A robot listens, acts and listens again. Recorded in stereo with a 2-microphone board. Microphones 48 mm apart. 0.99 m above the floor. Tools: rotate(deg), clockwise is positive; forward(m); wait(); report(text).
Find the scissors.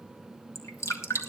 wait()
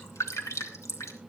wait()
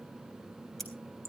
rotate(-30)
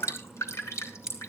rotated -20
rotate(15)
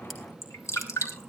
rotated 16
wait()
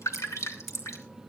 wait()
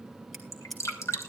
report("Found it: scissors, straight ahead, 2 to 4 m away.")